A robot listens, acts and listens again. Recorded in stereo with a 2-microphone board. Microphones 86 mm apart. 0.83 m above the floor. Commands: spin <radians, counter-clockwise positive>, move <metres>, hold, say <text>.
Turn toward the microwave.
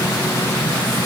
hold
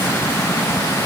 hold
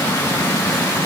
say I can't make out a microwave.